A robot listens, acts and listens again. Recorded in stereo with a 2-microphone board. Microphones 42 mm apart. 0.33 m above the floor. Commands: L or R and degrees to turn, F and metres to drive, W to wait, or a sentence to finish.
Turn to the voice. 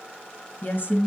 L50
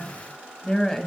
L10
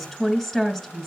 Found it: a woman speaking, straight ahead.